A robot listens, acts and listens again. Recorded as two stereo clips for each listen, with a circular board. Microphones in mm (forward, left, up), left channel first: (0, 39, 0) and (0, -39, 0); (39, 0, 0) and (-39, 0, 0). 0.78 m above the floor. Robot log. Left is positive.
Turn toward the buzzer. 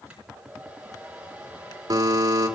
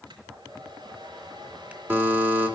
note: The buzzer: 120° right.
cmd yaw -120
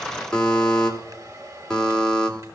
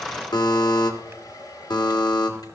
note: The buzzer is now 10° left.
cmd yaw +10
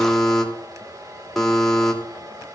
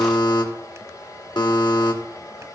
end: Found it: a buzzer, straight ahead.